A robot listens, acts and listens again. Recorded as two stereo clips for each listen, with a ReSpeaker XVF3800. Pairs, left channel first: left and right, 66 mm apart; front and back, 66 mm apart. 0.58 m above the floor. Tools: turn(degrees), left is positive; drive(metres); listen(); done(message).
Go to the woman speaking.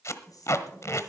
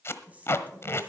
turn(degrees=115)
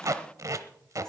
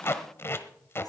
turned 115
listen()
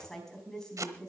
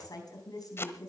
turn(degrees=10)
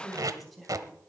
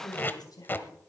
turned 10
drive(metres=1.0)
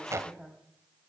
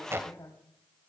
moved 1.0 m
drive(metres=1.0)
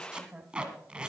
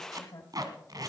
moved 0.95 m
turn(degrees=-10)
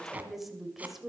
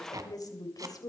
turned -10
drive(metres=1.0)
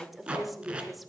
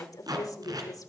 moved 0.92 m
drive(metres=1.0)
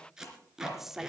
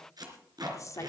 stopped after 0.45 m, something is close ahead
done("I am next to the woman speaking.")